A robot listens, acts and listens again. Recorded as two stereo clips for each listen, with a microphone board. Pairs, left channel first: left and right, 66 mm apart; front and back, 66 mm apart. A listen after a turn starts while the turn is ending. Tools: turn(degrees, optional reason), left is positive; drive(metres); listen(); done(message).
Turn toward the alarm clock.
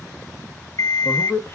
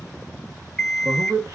turn(degrees=80, reason="The alarm clock: 80° left.")
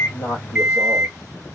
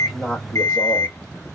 turn(degrees=-15, reason="The alarm clock is now 15° right.")
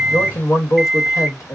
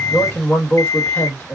done("Facing the alarm clock.")